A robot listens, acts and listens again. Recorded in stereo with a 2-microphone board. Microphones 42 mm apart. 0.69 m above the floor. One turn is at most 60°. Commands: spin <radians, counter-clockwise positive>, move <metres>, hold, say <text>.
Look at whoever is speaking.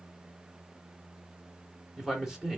spin -0.52
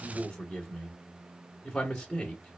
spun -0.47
spin 0.35
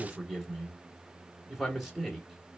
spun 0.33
say Facing the man speaking, 2 to 4 m away.